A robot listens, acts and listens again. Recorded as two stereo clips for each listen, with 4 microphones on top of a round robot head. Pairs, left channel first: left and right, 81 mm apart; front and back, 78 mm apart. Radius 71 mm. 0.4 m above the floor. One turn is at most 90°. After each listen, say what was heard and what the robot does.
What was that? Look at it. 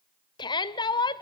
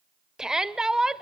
The shout: 100° left. Turn 90° left.
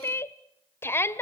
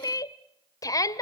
The shout is now 35° left. Turn 35° left.
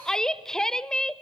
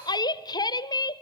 The shout is now 10° left. Turn 10° left.
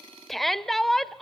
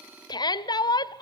Found it: a shout, straight ahead, 1 to 2 m away.